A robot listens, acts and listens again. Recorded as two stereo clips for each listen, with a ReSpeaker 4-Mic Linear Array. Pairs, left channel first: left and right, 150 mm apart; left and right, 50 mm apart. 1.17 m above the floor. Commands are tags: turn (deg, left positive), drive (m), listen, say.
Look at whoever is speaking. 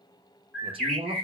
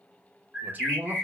<turn deg="-40"/>
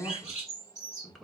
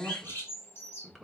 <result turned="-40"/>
<say>Found it: a man speaking, straight ahead, 1 to 2 m away.</say>